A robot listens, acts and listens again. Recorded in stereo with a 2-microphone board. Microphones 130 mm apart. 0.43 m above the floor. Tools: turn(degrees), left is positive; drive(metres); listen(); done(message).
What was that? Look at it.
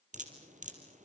turn(degrees=-75)
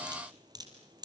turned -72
turn(degrees=-30)
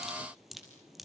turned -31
done("Found it: dripping, straight ahead, over 4 m away.")